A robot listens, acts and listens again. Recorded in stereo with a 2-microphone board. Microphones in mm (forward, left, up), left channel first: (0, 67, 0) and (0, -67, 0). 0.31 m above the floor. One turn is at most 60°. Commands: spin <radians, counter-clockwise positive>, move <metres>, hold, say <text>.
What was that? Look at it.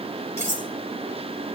spin 0.35
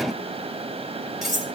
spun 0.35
say Facing the cutlery clinking.